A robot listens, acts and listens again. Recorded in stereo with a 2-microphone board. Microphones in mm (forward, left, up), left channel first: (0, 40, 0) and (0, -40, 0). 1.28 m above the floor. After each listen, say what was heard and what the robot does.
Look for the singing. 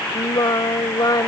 The singing: about 55° left or 125° left. Turn 55° left.
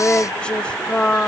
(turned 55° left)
So it is at 15° left. Turn 15° left.
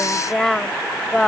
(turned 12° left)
Found it: singing, straight ahead.